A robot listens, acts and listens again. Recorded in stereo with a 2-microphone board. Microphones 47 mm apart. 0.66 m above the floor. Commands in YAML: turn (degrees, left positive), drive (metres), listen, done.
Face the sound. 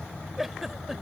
turn: -30
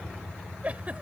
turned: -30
turn: -145
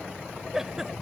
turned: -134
turn: -10
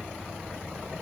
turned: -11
listen: true
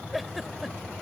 done: "Facing the giggle."